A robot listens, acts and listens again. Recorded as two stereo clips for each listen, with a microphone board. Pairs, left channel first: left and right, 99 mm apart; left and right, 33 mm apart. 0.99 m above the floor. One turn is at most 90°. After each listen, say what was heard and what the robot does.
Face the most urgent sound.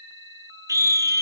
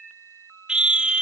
The scream: about 35° right or 145° right. Turn 35° right.
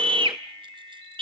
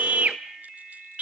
So it is at 110° right. Turn 90° right.
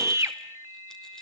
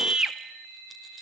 The scream is now 30° right. Turn 30° right.
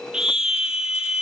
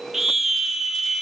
Facing the scream, 1 to 2 m away.